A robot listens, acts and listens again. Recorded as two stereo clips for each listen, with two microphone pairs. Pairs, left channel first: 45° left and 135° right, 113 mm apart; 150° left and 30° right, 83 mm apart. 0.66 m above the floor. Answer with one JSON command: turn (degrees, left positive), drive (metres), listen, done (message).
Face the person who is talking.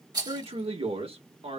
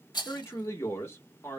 {"turn": -155}
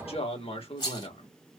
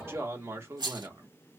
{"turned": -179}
{"turn": 25}
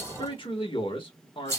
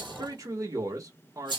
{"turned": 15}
{"turn": 10}
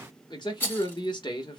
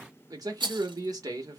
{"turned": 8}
{"done": "Facing the man speaking, 1 to 2 m away."}